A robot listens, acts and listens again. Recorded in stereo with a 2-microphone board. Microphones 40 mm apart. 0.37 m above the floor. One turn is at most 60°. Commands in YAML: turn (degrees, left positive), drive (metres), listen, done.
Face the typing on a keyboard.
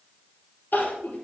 listen: true
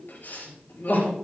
listen: true
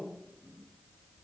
done: "I can't make out typing on a keyboard, only crying."